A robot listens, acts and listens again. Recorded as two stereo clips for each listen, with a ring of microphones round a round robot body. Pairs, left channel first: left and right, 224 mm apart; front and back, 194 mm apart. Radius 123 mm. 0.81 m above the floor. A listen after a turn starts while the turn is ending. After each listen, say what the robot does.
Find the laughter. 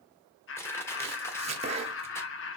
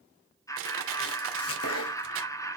Turn 70° left.
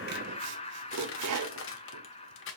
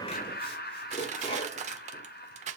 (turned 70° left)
Turn 30° left.
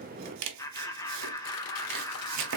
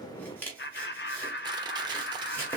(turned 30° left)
Turn 15° left.
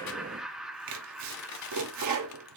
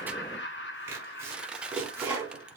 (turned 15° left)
Found it: laughter, straight ahead.